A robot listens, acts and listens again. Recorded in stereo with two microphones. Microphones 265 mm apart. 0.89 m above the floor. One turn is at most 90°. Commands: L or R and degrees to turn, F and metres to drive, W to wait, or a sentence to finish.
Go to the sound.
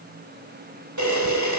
R90
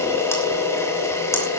L10
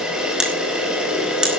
F1.0
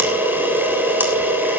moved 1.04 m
F1.0
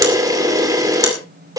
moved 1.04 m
R10
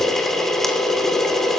F1.0
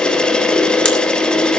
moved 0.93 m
F1.0
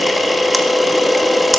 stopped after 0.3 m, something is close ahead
Arrived at the camera shutter, straight ahead.